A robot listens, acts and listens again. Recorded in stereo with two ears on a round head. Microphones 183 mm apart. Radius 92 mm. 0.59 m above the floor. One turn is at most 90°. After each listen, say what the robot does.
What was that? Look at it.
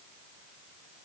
Keep listening.
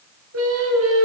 Turn 90° right.
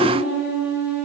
Found it: singing, straight ahead, over 4 m away.